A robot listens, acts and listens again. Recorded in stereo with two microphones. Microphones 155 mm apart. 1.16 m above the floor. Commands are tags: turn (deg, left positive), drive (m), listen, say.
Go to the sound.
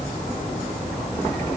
<listen/>
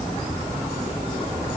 <listen/>
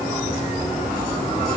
<say>I can't make out anything to turn to.</say>